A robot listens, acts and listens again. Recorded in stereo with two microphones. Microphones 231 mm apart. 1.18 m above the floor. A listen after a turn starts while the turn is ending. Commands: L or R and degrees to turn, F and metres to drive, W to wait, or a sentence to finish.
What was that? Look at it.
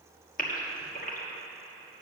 L35
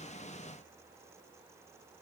W
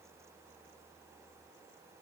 I heard a gasp, but can't make it out now. It was about straight ahead or 110° left.